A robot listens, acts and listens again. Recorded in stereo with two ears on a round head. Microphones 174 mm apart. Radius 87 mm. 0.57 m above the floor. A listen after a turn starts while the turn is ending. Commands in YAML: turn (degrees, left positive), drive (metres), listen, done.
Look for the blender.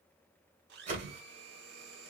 turn: -55
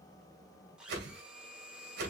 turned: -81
done: "Found it: a blender, straight ahead."